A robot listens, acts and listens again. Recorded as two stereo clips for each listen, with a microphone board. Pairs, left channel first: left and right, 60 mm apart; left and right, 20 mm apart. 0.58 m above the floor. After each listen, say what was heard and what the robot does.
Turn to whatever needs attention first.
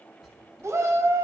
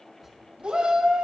The shout: about 60° right or 120° right. Turn 60° right.
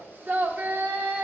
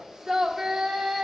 So it is at 40° right. Turn 40° right.
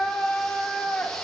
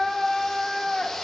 The shout is now 10° left. Turn 10° left.
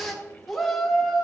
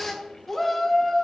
Facing the shout.